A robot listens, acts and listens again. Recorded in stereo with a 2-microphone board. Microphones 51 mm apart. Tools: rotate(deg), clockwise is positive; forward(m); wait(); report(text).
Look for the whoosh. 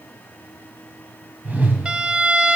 rotate(35)
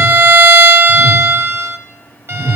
report("Facing the whoosh.")